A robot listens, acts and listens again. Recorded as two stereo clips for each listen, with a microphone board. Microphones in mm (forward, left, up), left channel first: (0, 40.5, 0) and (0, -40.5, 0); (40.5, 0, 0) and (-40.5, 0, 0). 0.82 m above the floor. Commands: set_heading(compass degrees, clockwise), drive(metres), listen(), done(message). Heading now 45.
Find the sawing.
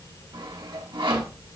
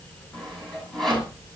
set_heading(130)
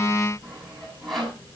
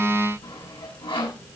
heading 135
done("Facing the sawing.")